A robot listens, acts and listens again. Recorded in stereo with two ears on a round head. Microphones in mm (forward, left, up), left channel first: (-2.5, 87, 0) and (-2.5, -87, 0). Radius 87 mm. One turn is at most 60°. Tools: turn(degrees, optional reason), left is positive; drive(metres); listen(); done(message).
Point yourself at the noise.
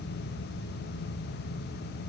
listen()
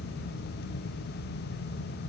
listen()
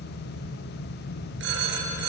turn(degrees=-60, reason="The phone ringing: about 65° right or 115° right.")
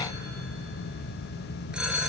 done("Found it: a phone ringing, straight ahead, over 4 m away.")